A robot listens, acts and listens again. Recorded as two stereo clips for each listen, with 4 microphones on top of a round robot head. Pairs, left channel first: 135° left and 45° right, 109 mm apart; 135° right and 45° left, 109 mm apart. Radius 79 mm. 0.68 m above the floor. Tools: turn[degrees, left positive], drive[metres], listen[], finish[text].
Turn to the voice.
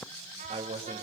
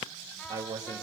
Thought: The man speaking: 10° right.
Action: turn[-10]
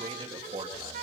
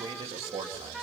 Action: finish[Facing the man speaking, 2 to 4 m away.]